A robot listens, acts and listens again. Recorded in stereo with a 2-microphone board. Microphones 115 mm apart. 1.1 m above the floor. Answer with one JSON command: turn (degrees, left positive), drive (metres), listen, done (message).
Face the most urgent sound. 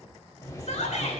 {"turn": 90}
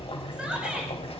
{"turn": -10}
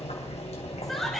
{"done": "Found it: a shout, straight ahead, over 4 m away."}